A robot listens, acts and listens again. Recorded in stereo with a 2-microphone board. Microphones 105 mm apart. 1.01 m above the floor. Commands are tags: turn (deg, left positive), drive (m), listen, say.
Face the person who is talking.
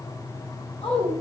<turn deg="65"/>
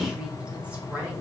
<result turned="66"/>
<turn deg="-15"/>
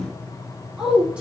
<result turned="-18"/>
<turn deg="-10"/>
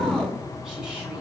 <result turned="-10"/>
<listen/>
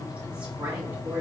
<turn deg="-15"/>
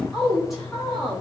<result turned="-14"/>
<say>Found it: a woman speaking, straight ahead, 2 to 4 m away.</say>